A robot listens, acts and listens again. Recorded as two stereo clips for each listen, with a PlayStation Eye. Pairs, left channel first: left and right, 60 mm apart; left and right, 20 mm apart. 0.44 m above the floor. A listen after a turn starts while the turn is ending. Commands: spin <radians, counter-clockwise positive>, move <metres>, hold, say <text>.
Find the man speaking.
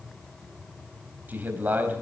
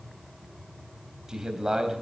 spin -0.52
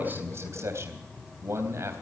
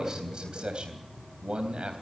spin -2.01
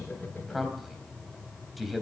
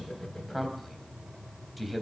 say Found it: a man speaking, straight ahead, 2 to 4 m away.